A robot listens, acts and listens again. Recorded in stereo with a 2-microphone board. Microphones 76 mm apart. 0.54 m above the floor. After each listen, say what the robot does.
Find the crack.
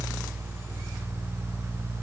Keep listening.
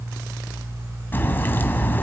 Turn 25° left.
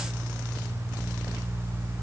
Keep listening.
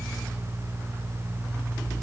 I heard a crack, but can't make it out now. It was about straight ahead or 130° left.